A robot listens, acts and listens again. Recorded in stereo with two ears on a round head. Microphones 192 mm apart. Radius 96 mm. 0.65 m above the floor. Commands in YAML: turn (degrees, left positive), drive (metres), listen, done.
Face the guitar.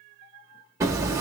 listen: true
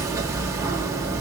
listen: true
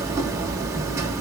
done: "I can't make out a guitar to turn to."